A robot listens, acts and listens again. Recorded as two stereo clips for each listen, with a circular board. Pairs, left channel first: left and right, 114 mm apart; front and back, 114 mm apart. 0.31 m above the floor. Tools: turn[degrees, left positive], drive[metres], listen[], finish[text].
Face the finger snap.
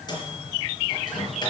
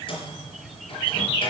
Action: listen[]
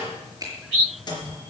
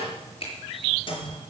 Thought: The finger snap: 30° right.
Action: turn[-30]
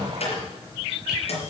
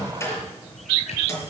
Action: listen[]
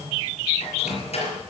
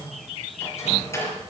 Action: listen[]
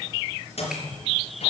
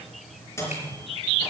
Action: finish[I heard a finger snap from this way, but can't make it out now.]